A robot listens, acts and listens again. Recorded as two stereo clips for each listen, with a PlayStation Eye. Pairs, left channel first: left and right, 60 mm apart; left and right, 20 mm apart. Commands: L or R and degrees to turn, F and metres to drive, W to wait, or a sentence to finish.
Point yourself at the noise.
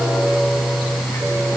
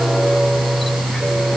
W
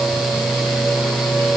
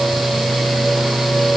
W
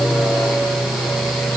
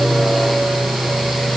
I can't make out anything.